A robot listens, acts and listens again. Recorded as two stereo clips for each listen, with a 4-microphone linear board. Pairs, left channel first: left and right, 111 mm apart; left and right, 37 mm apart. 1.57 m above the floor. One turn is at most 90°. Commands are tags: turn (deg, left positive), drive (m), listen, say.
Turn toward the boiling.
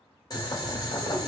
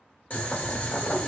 <turn deg="35"/>
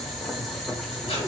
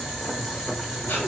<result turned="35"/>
<say>Found it: boiling, straight ahead.</say>